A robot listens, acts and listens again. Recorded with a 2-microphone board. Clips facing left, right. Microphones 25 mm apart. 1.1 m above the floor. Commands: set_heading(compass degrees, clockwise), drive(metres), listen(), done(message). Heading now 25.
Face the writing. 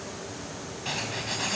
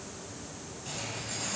set_heading(340)
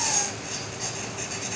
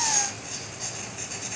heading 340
done("Found it: writing, straight ahead.")